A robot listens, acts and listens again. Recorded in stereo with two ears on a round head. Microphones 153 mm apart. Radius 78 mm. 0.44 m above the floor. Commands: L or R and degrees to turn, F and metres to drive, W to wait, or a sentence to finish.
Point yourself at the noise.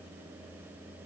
W
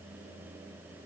W
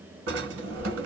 R90
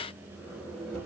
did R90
Found it: a drawer, straight ahead, 1 to 2 m away.